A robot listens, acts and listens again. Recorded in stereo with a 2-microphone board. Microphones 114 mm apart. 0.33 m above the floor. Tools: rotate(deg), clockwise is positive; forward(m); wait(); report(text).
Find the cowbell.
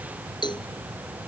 rotate(-40)
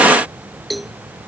report("Found it: a cowbell, straight ahead.")